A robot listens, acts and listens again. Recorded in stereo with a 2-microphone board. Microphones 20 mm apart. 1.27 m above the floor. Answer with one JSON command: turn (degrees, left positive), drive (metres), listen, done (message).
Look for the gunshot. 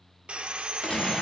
{"turn": 75}
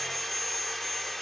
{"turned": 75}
{"listen": true}
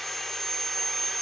{"done": "I heard a gunshot, but can't make it out now. It was about straight ahead or 30° left."}